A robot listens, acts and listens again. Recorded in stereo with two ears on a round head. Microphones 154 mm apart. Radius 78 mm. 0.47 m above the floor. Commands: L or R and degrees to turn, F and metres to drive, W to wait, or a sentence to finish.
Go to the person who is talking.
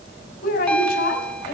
L60
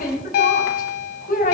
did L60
L50
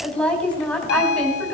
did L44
F1.0
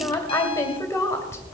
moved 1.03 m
L15
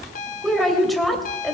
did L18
F1.0
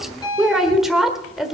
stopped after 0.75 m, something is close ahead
Arrived at the woman speaking, straight ahead.